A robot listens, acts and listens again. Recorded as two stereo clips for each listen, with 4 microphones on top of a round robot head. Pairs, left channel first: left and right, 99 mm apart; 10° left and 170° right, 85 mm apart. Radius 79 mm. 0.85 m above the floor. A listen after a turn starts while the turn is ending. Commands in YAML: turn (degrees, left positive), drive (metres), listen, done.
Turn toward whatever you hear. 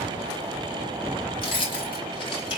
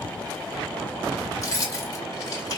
turn: 55
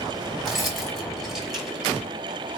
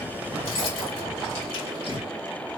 listen: true
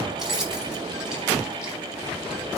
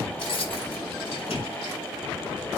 done: "Found it: keys jangling, straight ahead."